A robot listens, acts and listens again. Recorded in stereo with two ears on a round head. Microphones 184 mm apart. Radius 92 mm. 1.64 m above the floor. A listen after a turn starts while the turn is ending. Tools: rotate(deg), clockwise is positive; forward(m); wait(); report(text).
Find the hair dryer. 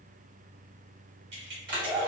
rotate(45)
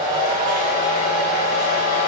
rotate(95)
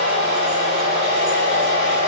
rotate(35)
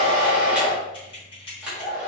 report("Facing the hair dryer.")